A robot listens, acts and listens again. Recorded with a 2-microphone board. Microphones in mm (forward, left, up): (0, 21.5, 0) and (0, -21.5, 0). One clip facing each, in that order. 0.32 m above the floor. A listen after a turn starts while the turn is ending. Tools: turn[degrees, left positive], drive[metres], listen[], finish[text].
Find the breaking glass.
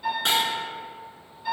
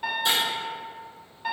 Thought: The breaking glass: about 60° left or 120° left.
Action: turn[60]
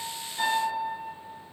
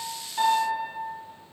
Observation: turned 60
Action: listen[]
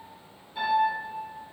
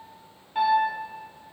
Action: finish[I heard breaking glass, but can't make it out now. It was about straight ahead or 60° left.]